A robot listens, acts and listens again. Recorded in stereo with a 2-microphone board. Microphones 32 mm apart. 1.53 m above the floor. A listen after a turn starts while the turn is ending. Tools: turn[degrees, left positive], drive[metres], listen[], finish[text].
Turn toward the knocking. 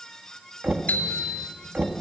Thought: The knocking: about 65° right or 115° right.
Action: turn[-65]
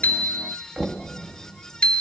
Thought: So it is at 35° right.
Action: turn[-35]
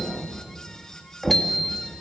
Thought: The knocking is now 10° right.
Action: turn[-10]
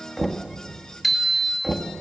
Action: finish[Facing the knocking.]